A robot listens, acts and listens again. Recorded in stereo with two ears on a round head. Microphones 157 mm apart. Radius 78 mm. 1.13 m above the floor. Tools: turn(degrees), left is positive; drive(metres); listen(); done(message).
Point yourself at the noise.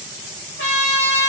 turn(degrees=70)
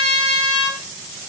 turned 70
turn(degrees=35)
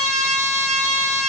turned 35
done("Facing the trumpet, 2 to 4 m away.")